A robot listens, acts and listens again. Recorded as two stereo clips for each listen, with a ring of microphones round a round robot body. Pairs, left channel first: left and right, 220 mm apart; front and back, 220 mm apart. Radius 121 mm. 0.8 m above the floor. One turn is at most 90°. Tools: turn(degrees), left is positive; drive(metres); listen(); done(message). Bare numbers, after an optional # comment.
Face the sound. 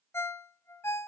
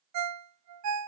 # The ringtone: 170° left.
turn(90)
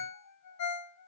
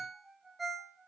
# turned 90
# The ringtone is now 90° left.
turn(90)
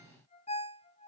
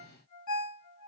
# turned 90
# The ringtone is now 25° left.
turn(25)
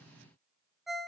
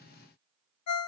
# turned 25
done("Found it: a ringtone, straight ahead, under 1 m away.")